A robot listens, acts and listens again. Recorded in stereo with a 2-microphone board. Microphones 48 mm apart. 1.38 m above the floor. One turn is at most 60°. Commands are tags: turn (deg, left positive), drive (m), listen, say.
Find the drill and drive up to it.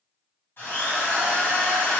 <turn deg="50"/>
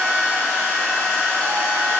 <turn deg="60"/>
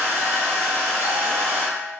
<drive m="1.0"/>
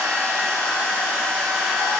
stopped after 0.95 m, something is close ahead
<say>I am next to the drill.</say>